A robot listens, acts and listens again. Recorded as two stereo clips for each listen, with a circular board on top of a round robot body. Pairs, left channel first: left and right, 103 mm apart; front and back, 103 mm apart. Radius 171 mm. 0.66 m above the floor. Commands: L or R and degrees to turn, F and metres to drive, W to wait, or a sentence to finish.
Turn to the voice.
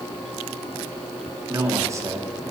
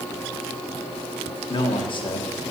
R30
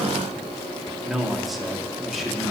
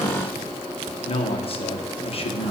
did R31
Found it: a man speaking, straight ahead.